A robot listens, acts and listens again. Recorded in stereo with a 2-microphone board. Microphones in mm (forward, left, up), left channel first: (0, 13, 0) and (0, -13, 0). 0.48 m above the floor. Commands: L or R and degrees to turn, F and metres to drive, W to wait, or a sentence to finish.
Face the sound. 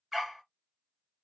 R30
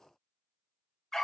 L15
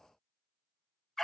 L10
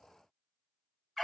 Facing the dog barking.